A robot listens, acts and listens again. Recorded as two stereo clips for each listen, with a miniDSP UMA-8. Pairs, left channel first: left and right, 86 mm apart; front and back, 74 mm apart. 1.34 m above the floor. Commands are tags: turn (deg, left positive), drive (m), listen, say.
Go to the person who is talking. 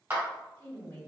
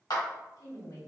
<turn deg="25"/>
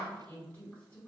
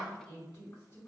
<turn deg="20"/>
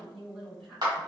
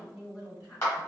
<drive m="1.0"/>
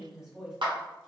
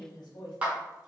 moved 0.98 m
<drive m="1.0"/>
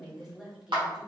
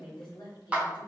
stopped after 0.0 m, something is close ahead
<say>I am next to the woman speaking.</say>